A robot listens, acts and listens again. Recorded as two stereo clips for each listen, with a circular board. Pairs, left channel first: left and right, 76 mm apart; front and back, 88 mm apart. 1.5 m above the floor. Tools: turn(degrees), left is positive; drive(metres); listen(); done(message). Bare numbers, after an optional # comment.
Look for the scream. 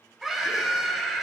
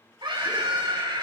# The scream: 175° right.
turn(-175)
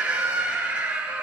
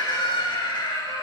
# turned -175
# The scream is now 15° right.
turn(-15)
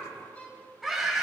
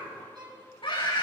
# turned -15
done("Facing the scream.")